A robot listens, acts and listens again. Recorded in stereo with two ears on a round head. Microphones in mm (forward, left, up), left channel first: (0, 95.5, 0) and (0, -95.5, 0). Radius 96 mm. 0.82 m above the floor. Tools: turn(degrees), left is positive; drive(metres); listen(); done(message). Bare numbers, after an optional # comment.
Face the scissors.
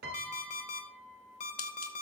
# The scissors: about 70° left or 110° left.
turn(70)
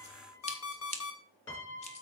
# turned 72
# So it is at 35° left.
turn(35)
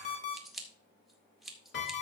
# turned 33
done("Found it: scissors, straight ahead, 2 to 4 m away.")